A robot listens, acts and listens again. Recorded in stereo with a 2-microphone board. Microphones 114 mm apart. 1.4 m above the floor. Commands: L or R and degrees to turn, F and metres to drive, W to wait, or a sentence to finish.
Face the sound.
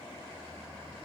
W
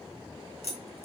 L75
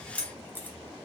L15
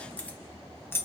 L20
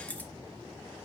L15
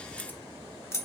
L25
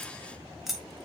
Found it: keys jangling, straight ahead.